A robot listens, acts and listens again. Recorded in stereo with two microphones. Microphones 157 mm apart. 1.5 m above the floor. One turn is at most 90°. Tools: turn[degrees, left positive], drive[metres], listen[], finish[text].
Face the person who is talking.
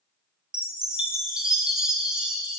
Action: listen[]
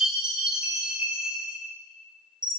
Action: listen[]
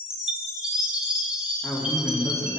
Action: turn[30]
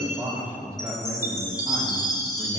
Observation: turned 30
Thought: So it is at 25° right.
Action: turn[-25]
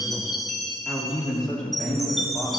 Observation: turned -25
Action: finish[Facing the man speaking, 2 to 4 m away.]